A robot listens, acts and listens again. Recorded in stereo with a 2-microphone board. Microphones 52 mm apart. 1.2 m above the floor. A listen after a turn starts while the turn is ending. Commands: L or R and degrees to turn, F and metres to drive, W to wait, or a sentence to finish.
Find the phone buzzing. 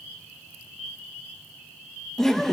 W
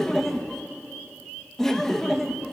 W
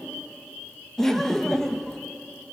I can't make out a phone buzzing, only laughter.